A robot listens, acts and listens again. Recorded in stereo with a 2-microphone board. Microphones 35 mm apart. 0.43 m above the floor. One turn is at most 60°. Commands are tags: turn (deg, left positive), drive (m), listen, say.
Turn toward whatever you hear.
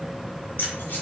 <turn deg="60"/>
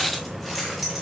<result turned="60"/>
<turn deg="-10"/>
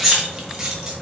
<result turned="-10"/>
<turn deg="-20"/>
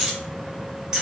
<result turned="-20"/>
<turn deg="-25"/>
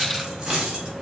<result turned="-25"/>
<turn deg="-20"/>
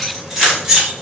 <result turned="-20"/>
<turn deg="-10"/>
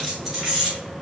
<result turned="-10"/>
<say>Facing the keys jangling.</say>